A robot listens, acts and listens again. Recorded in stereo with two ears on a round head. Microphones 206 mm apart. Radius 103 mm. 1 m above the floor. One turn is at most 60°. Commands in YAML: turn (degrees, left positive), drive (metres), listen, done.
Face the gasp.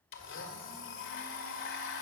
listen: true
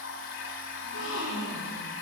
turn: 60
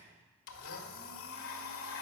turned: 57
listen: true
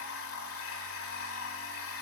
done: "I heard a gasp, but can't make it out now. It was about straight ahead or 65° left."